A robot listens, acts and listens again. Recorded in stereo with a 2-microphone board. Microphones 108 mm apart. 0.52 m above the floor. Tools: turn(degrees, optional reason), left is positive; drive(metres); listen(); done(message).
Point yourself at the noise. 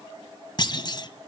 turn(degrees=40, reason="The clunk: about 40° left or 140° left.")
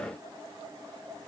listen()
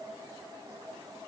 done("I heard a clunk, but can't make it out now. It was about straight ahead or 100° left.")